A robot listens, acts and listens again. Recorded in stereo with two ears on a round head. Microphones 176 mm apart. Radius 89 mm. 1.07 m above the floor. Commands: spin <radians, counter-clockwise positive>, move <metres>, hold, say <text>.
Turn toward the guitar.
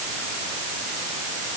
hold
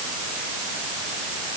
hold
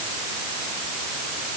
say I can't make out a guitar to turn to.